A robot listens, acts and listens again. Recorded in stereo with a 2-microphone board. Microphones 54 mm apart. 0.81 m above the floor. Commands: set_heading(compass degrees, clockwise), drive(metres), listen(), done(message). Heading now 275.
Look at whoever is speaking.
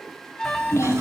set_heading(215)
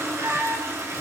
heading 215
listen()
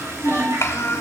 set_heading(155)
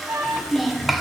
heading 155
done("Facing the child speaking.")